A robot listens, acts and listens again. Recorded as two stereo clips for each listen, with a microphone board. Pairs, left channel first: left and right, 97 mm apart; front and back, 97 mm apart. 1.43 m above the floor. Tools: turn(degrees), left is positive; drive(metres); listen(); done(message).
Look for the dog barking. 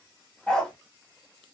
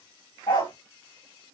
turn(degrees=10)
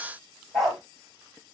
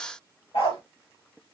done("Found it: a dog barking, straight ahead, 2 to 4 m away.")